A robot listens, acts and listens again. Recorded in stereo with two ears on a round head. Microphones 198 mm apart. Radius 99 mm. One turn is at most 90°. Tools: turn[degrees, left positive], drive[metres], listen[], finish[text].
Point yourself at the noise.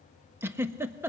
Action: turn[-30]
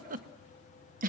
Thought: So it is at 140° right.
Action: turn[-90]
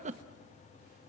Thought: The giggle is now 35° right.
Action: turn[-35]
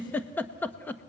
Thought: The giggle is now 10° left.
Action: turn[10]
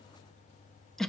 Action: finish[Found it: a giggle, straight ahead.]